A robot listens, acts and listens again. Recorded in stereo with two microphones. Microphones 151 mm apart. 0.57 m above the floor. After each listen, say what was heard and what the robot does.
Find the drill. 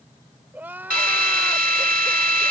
The drill: about 70° right or 110° right. Turn 70° right.
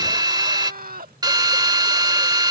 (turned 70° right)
So it is at 30° right. Turn 30° right.
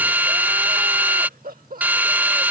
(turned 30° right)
The drill is now 10° right. Turn 10° right.
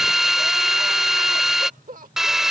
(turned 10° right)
Facing the drill.